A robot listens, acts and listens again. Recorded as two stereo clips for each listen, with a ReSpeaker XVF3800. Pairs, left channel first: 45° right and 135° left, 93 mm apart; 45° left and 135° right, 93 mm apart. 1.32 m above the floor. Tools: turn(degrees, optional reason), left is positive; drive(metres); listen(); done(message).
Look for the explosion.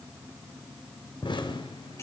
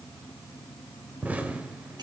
turn(degrees=-65, reason="The explosion: 65° right.")
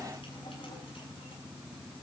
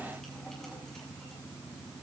done("Facing where the explosion came from. I can't hear it now.")